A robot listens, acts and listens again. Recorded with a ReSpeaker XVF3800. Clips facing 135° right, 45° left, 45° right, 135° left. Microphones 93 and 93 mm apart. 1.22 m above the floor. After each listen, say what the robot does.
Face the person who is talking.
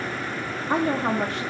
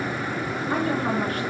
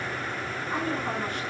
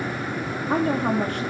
Turn 165° left.
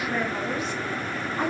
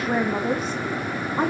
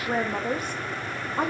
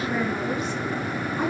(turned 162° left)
Found it: a woman speaking, straight ahead.